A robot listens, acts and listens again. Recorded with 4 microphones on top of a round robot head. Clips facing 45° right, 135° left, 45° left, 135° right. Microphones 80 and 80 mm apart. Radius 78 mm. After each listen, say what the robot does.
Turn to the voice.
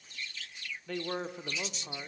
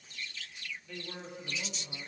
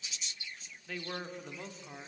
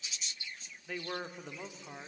Turn 55° right.
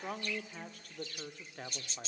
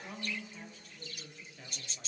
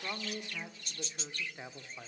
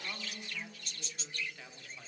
Turn 15° right.
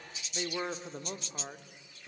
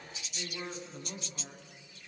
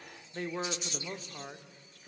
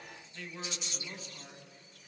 Found it: a man speaking, straight ahead, 1 to 2 m away.